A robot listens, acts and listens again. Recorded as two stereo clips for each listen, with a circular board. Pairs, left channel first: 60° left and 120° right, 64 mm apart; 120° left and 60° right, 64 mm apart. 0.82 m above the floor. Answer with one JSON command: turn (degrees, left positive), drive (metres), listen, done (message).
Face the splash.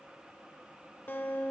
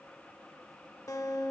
{"listen": true}
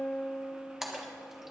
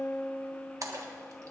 {"turn": -35}
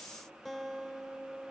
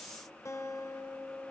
{"done": "I heard a splash from this way, but can't make it out now."}